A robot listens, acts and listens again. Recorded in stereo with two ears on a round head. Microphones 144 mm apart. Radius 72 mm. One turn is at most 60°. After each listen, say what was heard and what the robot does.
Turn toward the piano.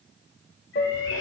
The piano: about 55° left or 125° left. Turn 55° left.
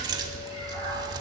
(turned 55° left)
Keep listening.
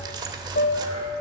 So it is at 60° left. Turn 60° left.
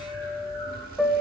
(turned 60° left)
Found it: a piano, straight ahead, under 1 m away.